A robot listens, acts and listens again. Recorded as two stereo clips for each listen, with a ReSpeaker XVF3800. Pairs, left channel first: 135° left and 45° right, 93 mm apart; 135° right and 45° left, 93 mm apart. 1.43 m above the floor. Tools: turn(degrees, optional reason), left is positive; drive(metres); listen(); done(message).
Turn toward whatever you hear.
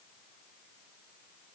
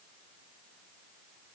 listen()
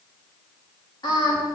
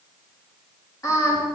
turn(degrees=175, reason="The singing: 175° left.")
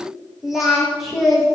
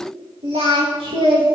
turn(degrees=45, reason="The singing is now 45° left.")
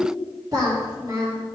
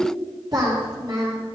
done("Found it: singing, straight ahead.")